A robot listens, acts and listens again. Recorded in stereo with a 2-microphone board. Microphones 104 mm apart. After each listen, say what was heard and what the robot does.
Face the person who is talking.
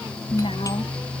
The woman speaking: about 65° left or 115° left. Turn 65° left.
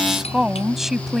Facing the woman speaking.